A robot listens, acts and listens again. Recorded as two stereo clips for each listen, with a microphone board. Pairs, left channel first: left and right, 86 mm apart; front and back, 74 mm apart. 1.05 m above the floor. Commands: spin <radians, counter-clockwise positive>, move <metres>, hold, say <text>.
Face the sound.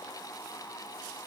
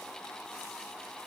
hold
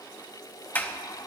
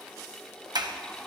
spin 2.79
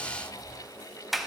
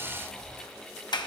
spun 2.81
say Facing the sliding door.